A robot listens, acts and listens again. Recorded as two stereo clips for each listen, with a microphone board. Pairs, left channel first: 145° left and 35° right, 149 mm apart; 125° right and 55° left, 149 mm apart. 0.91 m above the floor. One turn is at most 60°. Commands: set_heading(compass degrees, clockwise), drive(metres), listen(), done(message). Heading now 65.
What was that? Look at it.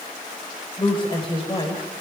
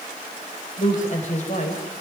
set_heading(125)
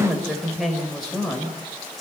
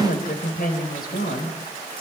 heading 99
set_heading(159)
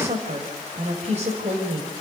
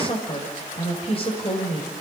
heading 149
set_heading(209)
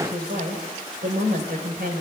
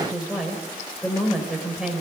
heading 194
set_heading(224)
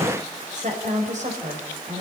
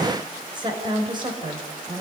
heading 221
done("Found it: a woman speaking, straight ahead.")